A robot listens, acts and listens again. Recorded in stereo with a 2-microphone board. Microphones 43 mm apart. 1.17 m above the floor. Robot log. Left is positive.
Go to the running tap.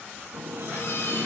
cmd yaw -90
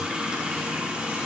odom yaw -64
note: So it is at 20° right.
cmd yaw -20
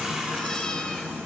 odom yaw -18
cmd fwd 1.0
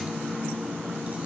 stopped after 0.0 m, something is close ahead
end: Blocked. The running tap is further on, straight ahead.